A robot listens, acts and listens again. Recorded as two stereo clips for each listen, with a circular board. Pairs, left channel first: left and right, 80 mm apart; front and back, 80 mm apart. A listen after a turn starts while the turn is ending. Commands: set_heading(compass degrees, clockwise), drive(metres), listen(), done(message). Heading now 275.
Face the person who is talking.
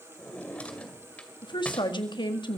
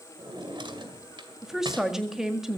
set_heading(180)
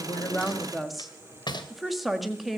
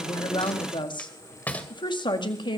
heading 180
done("Facing the woman speaking.")